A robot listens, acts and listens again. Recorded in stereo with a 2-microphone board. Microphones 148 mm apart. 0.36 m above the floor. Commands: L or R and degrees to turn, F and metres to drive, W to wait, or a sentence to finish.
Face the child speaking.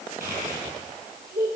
R90
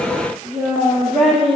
Facing the child speaking.